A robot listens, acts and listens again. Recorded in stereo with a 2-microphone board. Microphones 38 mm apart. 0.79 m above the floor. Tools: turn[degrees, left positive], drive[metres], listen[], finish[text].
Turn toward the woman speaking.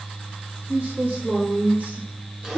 Thought: The woman speaking: about 35° right or 145° right.
Action: turn[-35]
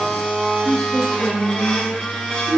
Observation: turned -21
Thought: So it is at 35° left.
Action: turn[35]
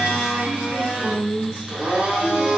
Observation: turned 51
Action: finish[Facing the woman speaking, 2 to 4 m away.]